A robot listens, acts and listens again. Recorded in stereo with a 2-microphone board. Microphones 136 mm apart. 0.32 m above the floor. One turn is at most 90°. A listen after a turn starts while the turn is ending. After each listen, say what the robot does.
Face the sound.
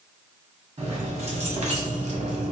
Turn 60° right.
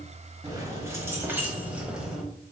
Facing the keys jangling, 1 to 2 m away.